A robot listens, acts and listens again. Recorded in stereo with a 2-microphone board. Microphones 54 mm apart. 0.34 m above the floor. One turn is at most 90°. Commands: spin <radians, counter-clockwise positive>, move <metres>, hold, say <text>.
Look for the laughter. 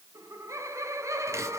spin -1.13
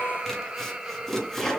spin -0.17
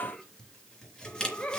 spin 0.35
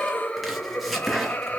spin 0.52
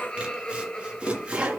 spin 0.26
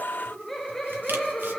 say Facing the laughter.